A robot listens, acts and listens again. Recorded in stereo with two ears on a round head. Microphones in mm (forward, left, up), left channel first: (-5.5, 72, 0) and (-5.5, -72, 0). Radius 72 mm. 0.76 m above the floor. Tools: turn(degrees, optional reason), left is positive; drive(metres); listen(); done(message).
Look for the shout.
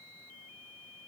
listen()
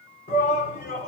turn(degrees=50, reason="The shout: about 50° left or 130° left.")
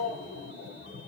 turn(degrees=85, reason="So it is at 85° left.")
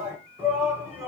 turn(degrees=-10, reason="The shout is now 10° right.")
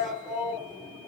done("Found it: a shout, straight ahead, over 4 m away.")